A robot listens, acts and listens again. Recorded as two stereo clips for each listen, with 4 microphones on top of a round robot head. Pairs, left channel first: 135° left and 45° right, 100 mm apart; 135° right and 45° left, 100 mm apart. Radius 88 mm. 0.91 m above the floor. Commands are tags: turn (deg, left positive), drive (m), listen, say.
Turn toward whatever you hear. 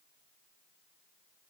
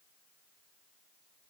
<listen/>
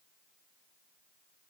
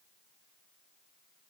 <listen/>
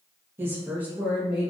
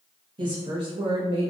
<turn deg="45"/>
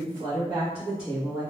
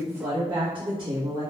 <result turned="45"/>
<turn deg="30"/>
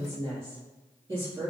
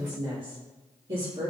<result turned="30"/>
<say>Found it: a woman speaking, straight ahead.</say>